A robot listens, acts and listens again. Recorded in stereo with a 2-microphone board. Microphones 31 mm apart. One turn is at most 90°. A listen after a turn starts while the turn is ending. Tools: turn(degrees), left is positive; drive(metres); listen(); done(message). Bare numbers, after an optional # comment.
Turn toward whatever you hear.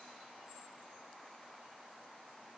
listen()
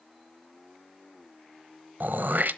turn(-90)
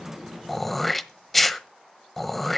done("Facing the throat clearing, 1 to 2 m away.")